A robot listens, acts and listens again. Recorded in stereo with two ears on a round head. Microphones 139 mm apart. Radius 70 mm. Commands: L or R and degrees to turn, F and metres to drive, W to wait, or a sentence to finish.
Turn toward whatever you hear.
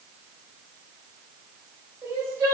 R20
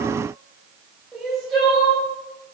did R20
Facing the crying, 1 to 2 m away.